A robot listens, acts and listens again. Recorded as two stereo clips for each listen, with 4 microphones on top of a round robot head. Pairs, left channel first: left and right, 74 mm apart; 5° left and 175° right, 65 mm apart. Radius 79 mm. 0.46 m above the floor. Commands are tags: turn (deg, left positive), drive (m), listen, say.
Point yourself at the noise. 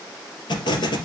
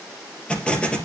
<turn deg="80"/>
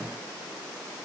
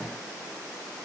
<say>Facing where the explosion came from. I can't hear it now.</say>